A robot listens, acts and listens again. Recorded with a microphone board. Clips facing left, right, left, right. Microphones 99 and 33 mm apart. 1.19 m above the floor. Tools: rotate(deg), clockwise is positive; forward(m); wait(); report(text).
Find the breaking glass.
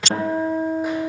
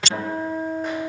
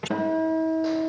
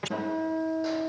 wait()
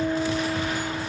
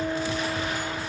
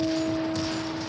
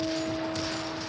wait()
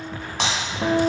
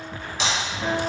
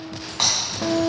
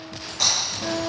rotate(-60)
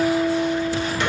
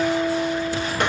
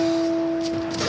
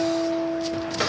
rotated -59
wait()
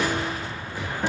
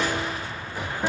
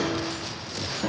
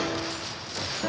report("I heard breaking glass, but can't make it out now. It was about straight ahead or 60° left.")